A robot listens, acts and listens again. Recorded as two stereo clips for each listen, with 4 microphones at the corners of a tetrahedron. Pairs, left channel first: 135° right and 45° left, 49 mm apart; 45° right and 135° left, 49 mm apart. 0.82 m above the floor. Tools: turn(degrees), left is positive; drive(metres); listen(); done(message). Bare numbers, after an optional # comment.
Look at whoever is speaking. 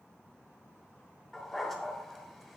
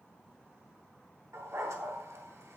listen()
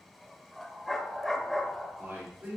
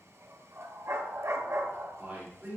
# The man speaking: 80° left.
turn(80)
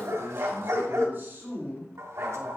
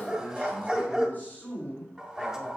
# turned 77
done("Found it: a man speaking, straight ahead, 2 to 4 m away.")